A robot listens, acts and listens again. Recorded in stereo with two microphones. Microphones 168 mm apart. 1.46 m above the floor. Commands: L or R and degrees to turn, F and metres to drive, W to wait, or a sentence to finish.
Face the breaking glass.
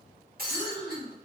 R70
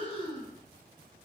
W
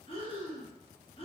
I heard breaking glass, but can't make it out now. It was about straight ahead or 40° right.